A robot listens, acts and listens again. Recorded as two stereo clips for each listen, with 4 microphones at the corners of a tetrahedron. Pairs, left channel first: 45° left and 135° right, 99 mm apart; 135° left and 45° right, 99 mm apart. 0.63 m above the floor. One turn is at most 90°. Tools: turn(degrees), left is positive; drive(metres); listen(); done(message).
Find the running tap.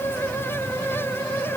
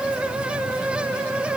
listen()
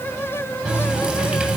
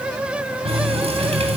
turn(degrees=-55)
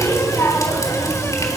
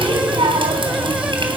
turn(degrees=-10)
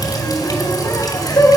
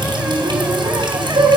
done("Found it: a running tap, straight ahead.")